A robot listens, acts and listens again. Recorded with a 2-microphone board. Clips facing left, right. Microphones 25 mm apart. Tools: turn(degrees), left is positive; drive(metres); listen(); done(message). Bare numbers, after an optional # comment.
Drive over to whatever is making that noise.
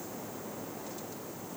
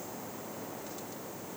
listen()
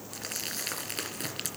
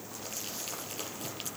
turn(90)
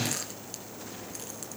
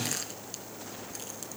drive(1.0)
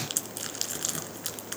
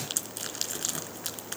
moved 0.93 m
drive(1.0)
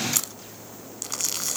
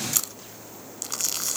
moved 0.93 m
drive(1.0)
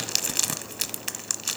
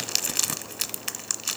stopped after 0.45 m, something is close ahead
done("Arrived at the crumpling, straight ahead.")